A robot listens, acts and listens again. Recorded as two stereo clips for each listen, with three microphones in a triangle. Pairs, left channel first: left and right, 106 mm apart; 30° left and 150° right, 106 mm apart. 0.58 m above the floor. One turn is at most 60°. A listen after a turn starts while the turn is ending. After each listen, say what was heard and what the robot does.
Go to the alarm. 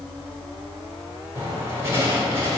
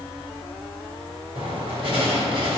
Keep listening.
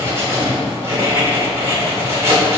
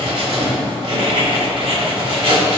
Keep listening.
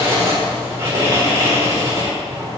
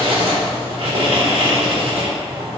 I can't make out an alarm, only writing.